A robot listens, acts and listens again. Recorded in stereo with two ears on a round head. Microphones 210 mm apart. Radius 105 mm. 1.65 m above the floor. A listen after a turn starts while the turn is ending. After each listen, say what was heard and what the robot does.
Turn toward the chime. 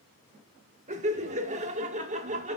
Keep listening.
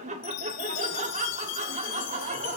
The chime: about 70° left or 110° left. Turn 70° left.
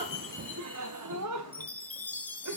Found it: a chime, straight ahead.